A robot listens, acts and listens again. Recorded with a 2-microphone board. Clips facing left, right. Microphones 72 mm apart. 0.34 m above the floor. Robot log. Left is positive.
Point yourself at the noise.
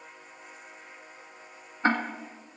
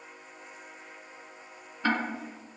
note: The ticking: about 35° left or 145° left.
cmd yaw +35
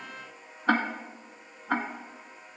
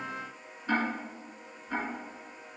note: So it is at 110° left.
cmd yaw +110
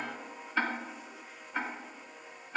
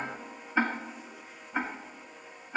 note: The ticking is now 15° right.
cmd yaw -15
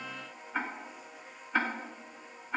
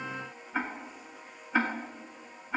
end: Facing the ticking.